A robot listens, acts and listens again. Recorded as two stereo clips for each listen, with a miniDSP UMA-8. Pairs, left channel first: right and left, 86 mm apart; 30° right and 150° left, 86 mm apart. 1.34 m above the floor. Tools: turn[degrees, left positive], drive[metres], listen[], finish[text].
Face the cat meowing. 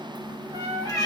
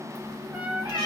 Thought: The cat meowing: 40° right.
Action: turn[-40]
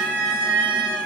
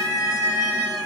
Thought: The cat meowing is now 20° left.
Action: turn[20]
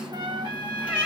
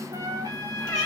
Thought: The cat meowing is now 15° left.
Action: turn[15]
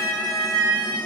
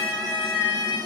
Action: finish[Facing the cat meowing.]